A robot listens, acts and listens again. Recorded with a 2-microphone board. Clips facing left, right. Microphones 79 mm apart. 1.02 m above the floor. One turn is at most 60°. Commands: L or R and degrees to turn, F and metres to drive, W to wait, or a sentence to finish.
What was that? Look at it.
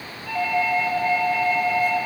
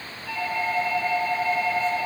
L60
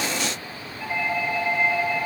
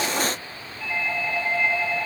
L10
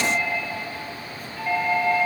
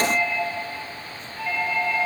Facing the doorbell, over 4 m away.